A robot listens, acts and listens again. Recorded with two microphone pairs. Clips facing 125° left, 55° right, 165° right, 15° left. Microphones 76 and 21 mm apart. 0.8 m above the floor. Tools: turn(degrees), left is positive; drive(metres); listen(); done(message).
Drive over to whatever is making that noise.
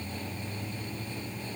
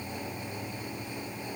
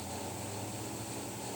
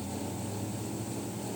listen()
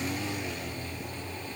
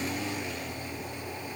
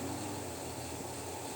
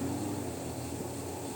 listen()
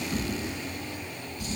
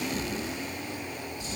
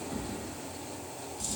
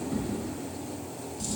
turn(degrees=100)
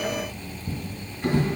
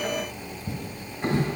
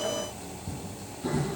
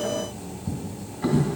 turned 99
drive(metres=1.0)
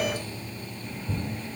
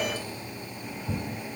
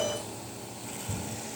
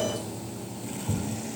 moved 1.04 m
drive(metres=1.0)
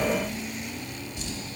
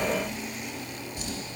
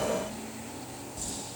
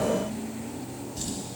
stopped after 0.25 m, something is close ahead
done("Arrived at the drawer, straight ahead.")